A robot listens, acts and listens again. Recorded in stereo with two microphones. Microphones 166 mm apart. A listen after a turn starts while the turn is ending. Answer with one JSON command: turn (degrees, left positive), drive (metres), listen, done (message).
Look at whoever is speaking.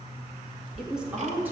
{"turn": -30}
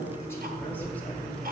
{"turn": 10}
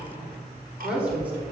{"turn": -10}
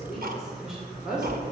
{"done": "Found it: a woman speaking, straight ahead, 2 to 4 m away."}